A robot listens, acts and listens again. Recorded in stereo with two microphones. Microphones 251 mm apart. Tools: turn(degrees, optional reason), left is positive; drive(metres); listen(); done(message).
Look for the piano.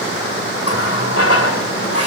listen()
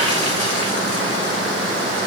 listen()
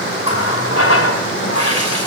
done("I can't make out a piano, only a running tap.")